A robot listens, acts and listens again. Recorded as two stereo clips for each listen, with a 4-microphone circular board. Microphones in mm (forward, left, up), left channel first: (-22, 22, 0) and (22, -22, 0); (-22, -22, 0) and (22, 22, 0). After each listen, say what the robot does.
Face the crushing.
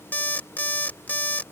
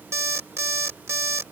Keep listening.
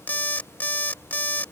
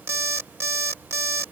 Keep listening.
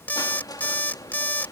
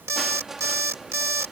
Turn 130° left.
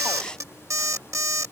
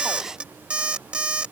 Keep listening.
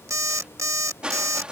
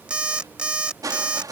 Turn 30° left.
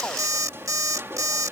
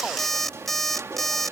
Facing the crushing.